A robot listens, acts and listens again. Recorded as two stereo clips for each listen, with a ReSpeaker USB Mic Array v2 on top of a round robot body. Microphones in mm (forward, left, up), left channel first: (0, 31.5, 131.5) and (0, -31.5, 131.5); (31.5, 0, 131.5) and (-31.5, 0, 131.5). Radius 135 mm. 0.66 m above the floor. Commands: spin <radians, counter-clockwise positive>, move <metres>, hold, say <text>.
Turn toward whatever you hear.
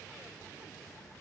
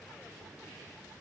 hold
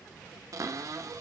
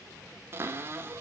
spin -2.18
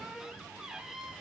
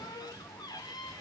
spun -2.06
spin -0.17
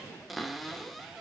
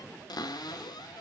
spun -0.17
say Found it: a cupboard door, straight ahead.